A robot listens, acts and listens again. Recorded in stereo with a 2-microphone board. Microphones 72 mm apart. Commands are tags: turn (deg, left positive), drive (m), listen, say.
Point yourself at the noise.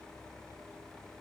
<listen/>
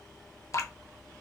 <turn deg="40"/>
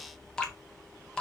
<turn deg="10"/>
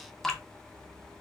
<say>Found it: dripping, straight ahead.</say>